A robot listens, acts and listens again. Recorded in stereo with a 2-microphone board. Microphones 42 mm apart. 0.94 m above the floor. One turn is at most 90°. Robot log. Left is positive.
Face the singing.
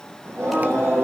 cmd yaw -90
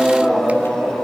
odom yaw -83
end: Found it: singing, straight ahead.